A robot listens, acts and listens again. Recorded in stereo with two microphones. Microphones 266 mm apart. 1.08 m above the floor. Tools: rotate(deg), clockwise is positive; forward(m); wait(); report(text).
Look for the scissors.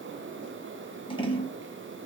rotate(-20)
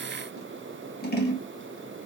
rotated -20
rotate(-140)
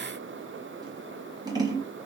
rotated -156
rotate(15)
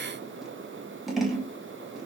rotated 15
report("Facing the scissors.")